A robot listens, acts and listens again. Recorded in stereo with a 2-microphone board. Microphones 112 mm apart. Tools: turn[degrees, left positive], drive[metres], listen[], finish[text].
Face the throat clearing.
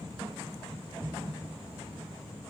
Action: listen[]
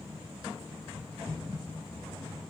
Action: listen[]
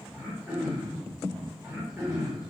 Action: turn[30]
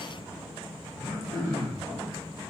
Thought: So it is at 150° left.
Action: turn[150]
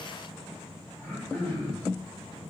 Action: finish[Found it: throat clearing, straight ahead.]